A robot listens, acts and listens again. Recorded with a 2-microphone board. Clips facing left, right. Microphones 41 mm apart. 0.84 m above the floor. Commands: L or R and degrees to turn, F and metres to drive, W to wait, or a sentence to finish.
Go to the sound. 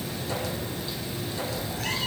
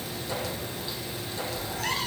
R90
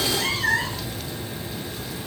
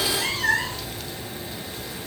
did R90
L10
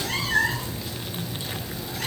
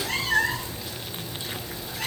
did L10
F1.0
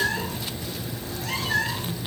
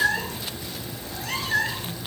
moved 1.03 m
F1.0
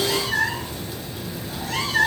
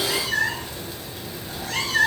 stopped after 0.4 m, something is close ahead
I am next to the cat meowing.